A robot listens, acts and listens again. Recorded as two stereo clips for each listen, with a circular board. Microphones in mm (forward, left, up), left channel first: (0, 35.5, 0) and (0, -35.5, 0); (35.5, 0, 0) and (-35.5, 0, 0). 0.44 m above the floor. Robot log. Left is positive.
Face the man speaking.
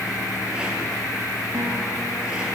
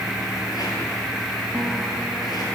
cmd idle
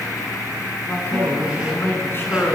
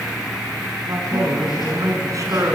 note: The man speaking: 145° left.
cmd yaw +145
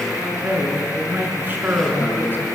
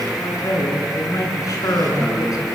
note: The man speaking is now 35° right.
cmd yaw -35
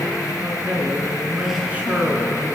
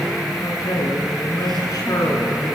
note: The man speaking is now 25° right.
cmd yaw -25
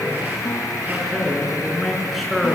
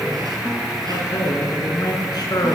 end: Found it: a man speaking, straight ahead, over 4 m away.